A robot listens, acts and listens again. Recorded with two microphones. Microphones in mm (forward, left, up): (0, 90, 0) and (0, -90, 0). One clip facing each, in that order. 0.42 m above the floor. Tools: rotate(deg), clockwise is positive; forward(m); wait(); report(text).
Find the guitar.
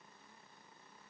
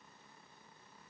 wait()
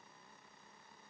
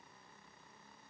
wait()
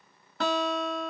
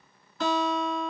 rotate(-65)
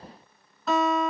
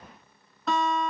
report("Facing the guitar, under 1 m away.")